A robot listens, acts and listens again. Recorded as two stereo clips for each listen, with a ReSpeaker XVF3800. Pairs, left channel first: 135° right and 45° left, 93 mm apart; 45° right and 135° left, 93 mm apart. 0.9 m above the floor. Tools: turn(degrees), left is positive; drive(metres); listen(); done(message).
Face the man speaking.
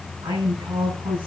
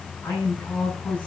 turn(degrees=30)
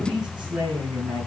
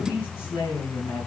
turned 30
turn(degrees=20)
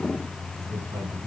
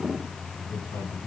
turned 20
done("Found it: a man speaking, straight ahead.")